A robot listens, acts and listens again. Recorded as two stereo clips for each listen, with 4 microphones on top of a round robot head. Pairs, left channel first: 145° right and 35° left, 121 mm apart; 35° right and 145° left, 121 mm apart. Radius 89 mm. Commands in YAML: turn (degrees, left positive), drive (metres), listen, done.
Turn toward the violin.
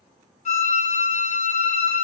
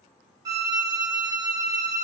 turn: -155
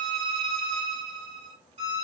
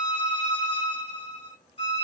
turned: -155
done: "Facing the violin."